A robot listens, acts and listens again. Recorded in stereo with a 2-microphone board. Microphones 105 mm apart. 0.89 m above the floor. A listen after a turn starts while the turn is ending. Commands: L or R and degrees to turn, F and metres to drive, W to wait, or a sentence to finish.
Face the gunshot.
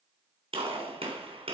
R65
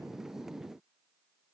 W
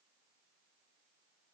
I heard a gunshot, but can't make it out now. It was about straight ahead or 50° right.